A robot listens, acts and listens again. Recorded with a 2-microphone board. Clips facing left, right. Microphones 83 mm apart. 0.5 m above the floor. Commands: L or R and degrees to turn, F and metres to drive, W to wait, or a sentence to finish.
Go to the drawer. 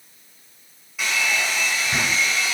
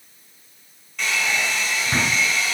R45
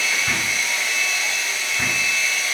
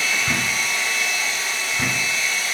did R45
F1.0
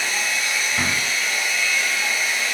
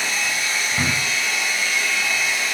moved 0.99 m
F1.0
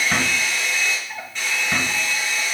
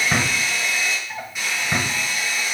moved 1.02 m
F1.0
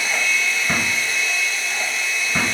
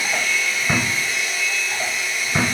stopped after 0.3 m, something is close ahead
R10
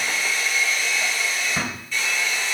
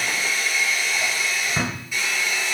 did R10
I am next to the drawer.